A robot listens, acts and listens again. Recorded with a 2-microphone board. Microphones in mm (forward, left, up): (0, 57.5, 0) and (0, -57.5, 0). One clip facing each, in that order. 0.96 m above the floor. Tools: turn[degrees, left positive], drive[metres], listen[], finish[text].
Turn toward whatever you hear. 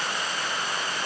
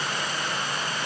Action: listen[]
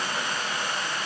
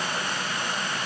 Action: listen[]
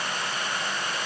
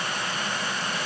Action: finish[I can't make out anything.]